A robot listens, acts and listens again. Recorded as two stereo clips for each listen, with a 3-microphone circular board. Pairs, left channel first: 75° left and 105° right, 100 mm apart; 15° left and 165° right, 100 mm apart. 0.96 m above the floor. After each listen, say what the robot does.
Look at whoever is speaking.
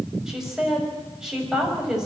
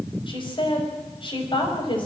Turn 20° right.
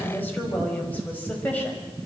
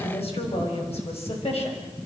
Facing the woman speaking.